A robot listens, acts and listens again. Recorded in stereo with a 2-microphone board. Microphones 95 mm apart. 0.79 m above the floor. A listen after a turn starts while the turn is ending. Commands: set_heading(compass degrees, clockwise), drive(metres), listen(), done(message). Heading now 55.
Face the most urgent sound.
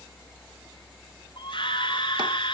set_heading(0)
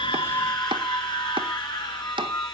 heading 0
set_heading(295)
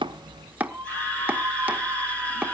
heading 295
set_heading(275)
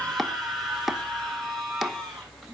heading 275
done("Found it: a scream, straight ahead.")